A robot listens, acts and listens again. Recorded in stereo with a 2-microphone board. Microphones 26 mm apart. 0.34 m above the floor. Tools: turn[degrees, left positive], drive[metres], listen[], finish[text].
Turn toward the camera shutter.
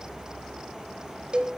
Action: listen[]
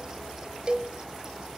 Action: listen[]
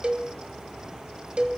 Action: finish[I can't make out a camera shutter, only a cowbell.]